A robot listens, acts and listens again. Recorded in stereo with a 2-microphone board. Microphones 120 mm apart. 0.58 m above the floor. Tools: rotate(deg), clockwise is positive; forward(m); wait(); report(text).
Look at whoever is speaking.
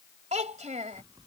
rotate(65)
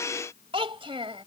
rotate(45)
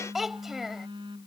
report("Found it: a child speaking, straight ahead.")